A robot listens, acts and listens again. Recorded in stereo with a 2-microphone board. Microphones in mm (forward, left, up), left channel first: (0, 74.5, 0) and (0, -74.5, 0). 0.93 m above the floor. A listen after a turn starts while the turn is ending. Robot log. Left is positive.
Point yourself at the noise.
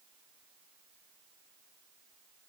cmd idle
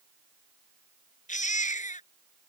note: The baby crying: about 60° left or 120° left.
cmd yaw +60
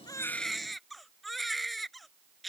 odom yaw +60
end: Facing the baby crying.